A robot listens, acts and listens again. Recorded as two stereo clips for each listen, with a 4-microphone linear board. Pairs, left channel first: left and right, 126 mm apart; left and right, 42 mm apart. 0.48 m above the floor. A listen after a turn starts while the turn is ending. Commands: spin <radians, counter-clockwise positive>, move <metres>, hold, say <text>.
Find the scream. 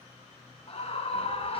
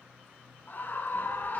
spin 1.05
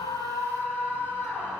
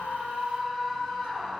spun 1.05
spin 0.26
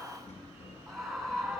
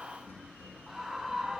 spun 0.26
say Facing the scream, 2 to 4 m away.